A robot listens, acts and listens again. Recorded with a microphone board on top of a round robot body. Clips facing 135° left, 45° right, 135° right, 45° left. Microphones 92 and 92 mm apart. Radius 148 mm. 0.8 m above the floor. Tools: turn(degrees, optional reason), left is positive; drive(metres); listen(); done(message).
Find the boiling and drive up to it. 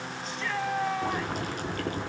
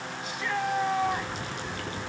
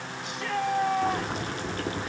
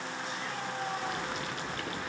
turn(degrees=175, reason="The boiling: 175° left.")
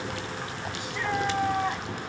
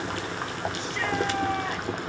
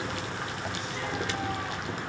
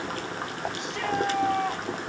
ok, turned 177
drive(metres=1.0)
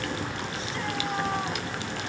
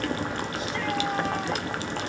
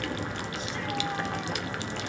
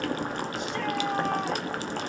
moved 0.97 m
drive(metres=1.0)
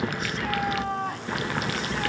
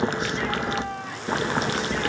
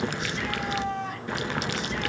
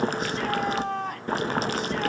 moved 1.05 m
drive(metres=1.0)
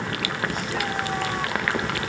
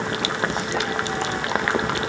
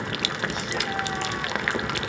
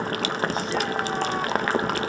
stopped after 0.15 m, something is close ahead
turn(degrees=10, reason="The boiling is now 10° left.")
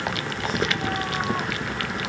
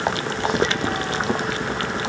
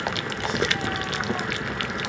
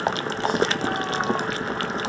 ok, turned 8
done("Arrived at the boiling, straight ahead.")